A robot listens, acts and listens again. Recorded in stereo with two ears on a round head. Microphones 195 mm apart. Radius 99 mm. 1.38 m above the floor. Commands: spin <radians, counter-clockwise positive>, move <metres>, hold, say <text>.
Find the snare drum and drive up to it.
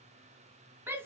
hold
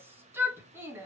hold
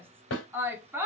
spin 1.05
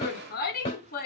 spin 0.44
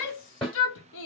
move 1.0
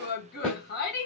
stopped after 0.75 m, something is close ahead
say I am next to the snare drum.